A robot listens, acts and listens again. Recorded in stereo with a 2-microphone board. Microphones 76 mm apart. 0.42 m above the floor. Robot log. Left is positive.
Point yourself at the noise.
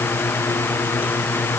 cmd idle
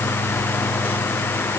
cmd idle
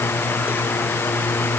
end: I can't make out anything to turn to.